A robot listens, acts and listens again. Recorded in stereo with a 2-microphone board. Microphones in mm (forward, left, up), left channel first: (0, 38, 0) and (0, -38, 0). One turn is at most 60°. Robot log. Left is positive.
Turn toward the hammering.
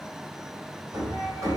note: The hammering: about 45° right or 135° right.
cmd yaw -45
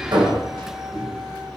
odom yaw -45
note: So it is at 85° right.
cmd yaw -60
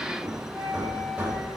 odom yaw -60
note: The hammering is now 20° right.
cmd yaw -20
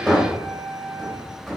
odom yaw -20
end: Found it: hammering, straight ahead, 2 to 4 m away.